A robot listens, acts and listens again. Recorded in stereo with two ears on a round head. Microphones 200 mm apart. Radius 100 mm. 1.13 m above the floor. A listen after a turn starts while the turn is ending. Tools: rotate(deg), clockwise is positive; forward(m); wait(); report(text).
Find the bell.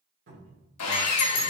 rotate(-50)
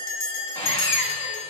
rotate(-80)
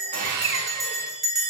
report("Found it: a bell, straight ahead.")